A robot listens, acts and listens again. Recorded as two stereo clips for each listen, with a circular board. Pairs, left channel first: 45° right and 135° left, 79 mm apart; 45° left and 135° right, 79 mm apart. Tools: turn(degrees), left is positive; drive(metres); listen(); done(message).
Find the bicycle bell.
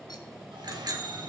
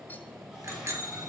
turn(degrees=170)
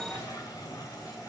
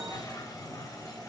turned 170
listen()
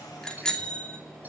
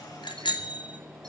turn(degrees=35)
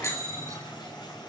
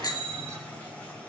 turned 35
turn(degrees=10)
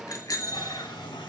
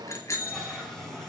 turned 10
done("Found it: a bicycle bell, straight ahead.")